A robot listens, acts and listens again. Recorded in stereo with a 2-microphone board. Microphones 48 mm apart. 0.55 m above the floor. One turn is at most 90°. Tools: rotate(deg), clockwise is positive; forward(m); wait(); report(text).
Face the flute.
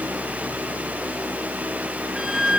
rotate(30)
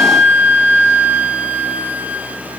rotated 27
rotate(90)
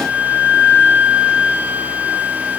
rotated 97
rotate(40)
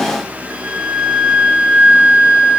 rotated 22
rotate(20)
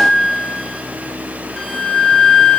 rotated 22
report("Found it: a flute, straight ahead.")